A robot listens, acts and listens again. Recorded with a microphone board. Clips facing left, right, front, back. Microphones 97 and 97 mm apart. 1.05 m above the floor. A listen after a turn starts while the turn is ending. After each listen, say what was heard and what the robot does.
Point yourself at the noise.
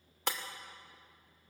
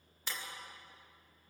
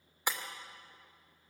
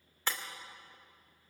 The breaking glass: 75° left. Turn 75° left.
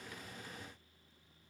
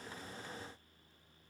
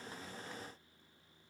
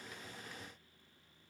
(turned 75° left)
I heard breaking glass from this way, but can't make it out now.